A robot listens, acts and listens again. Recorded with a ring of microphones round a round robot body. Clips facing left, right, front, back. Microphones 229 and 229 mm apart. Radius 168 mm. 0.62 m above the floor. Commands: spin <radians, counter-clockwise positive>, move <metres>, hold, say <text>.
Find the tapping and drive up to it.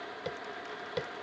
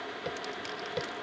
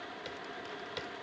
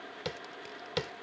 spin 3.14
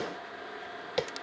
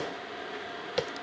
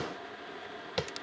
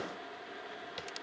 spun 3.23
move 1.0
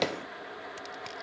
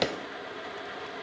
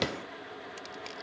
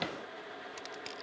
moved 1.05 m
spin -0.26
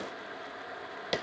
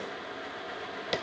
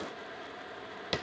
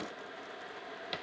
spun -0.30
move 1.0
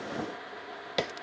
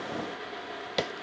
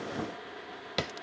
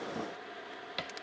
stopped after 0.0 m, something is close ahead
say I am next to the tapping.